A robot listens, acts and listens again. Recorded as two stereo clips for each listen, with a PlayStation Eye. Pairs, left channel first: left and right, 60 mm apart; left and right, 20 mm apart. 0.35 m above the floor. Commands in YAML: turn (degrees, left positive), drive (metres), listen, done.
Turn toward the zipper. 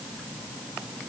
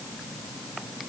listen: true
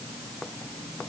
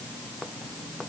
listen: true
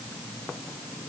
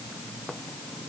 done: "I can't make out a zipper."